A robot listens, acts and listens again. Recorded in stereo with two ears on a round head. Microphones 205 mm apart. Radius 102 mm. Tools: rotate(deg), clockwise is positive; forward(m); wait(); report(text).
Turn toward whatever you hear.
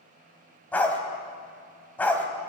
rotate(-30)
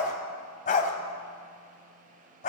rotate(-140)
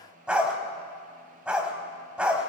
report("Found it: a dog barking, straight ahead, 2 to 4 m away.")